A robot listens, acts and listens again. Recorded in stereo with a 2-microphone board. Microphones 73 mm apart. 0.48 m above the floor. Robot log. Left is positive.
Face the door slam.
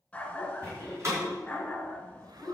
note: The door slam: about 40° right or 140° right.
cmd yaw -40
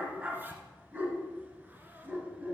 cmd idle
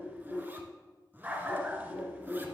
end: I heard a door slam, but can't make it out now. It was about straight ahead or 100° right.